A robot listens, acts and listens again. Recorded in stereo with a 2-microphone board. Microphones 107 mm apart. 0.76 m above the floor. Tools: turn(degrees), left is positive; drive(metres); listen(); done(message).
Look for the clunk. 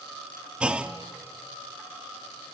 turn(degrees=-30)
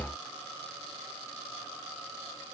listen()
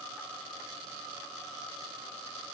done("I heard a clunk, but can't make it out now. It was about 20° left or 140° right.")